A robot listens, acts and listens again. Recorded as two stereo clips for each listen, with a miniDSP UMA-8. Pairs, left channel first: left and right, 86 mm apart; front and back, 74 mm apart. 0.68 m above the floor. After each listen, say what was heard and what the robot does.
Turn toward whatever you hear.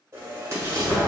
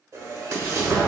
The explosion: 145° right. Turn 145° right.
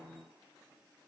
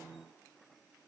Facing where the explosion came from. I can't hear it now.